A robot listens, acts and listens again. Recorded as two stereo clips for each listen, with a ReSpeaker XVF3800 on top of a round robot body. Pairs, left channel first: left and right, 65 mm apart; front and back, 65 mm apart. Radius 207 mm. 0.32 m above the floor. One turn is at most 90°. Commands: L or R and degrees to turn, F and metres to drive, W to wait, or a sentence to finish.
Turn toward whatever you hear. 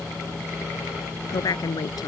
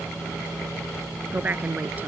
L90
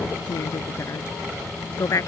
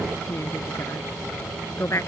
L50
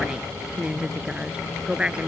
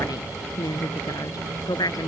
R15
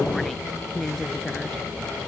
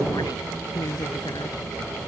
Found it: a woman speaking, straight ahead.